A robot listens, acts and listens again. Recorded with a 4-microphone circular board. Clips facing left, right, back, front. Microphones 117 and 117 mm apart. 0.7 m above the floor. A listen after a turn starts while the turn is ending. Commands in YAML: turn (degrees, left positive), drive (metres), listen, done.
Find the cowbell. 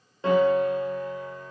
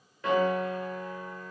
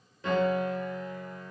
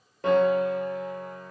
listen: true
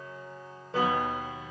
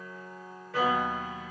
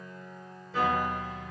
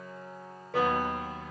listen: true
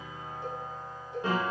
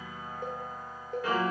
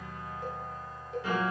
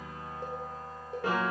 turn: -50
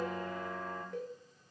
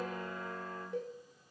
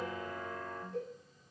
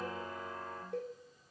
done: "Facing the cowbell, 1 to 2 m away."